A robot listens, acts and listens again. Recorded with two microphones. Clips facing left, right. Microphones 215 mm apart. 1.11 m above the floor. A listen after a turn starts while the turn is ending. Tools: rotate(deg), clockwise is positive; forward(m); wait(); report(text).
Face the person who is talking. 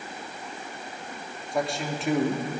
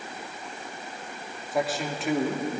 rotate(-30)
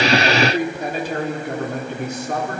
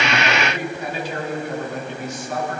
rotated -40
rotate(-120)
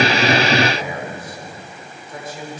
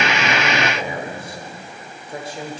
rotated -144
rotate(30)
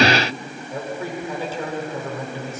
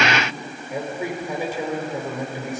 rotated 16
rotate(15)
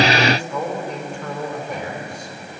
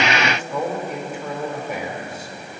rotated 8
report("Found it: a man speaking, straight ahead.")